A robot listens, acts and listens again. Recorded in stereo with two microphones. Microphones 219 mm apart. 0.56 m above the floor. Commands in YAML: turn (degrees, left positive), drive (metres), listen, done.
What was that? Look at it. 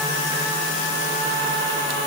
listen: true
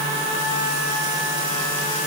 listen: true
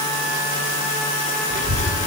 turn: -65
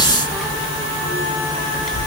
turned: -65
done: "Found it: a child speaking, straight ahead."